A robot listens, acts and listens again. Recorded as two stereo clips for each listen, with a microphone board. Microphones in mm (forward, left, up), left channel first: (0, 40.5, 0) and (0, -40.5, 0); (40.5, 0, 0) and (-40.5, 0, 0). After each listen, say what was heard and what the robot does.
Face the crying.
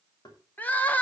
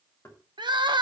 The crying: 160° left. Turn 160° left.
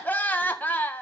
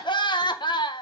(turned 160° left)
The crying is now 20° left. Turn 20° left.
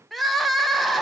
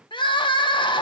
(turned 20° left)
Facing the crying.